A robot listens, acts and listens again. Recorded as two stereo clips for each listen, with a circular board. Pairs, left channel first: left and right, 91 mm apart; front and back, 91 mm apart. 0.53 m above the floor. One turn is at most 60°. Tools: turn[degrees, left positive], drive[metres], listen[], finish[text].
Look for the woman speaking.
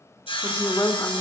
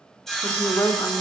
Thought: The woman speaking: 40° left.
Action: turn[40]
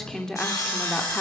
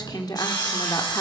Thought: The woman speaking is now 20° left.
Action: turn[20]
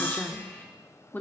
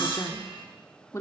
Thought: The woman speaking is now 35° left.
Action: turn[35]
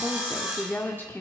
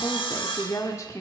Thought: The woman speaking is now 35° left.
Action: turn[35]
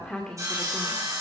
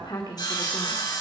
Thought: The woman speaking is now 10° left.
Action: turn[10]
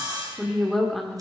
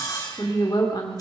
Action: finish[Found it: a woman speaking, straight ahead, 1 to 2 m away.]